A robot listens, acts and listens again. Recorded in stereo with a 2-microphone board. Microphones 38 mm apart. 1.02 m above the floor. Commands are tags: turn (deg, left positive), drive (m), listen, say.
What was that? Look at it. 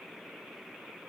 <listen/>
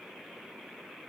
<listen/>
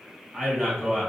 <turn deg="-15"/>
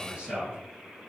<turn deg="-150"/>
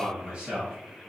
<turn deg="-20"/>
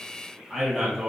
<say>Facing the man speaking, 1 to 2 m away.</say>